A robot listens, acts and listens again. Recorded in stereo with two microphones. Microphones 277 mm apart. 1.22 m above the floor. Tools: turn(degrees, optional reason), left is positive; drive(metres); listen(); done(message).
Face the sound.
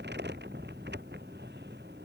listen()
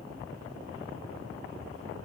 listen()
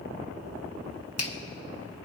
turn(degrees=60, reason="The finger snap: about 60° left or 120° left.")
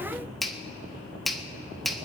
done("Found it: a finger snap, straight ahead, 1 to 2 m away.")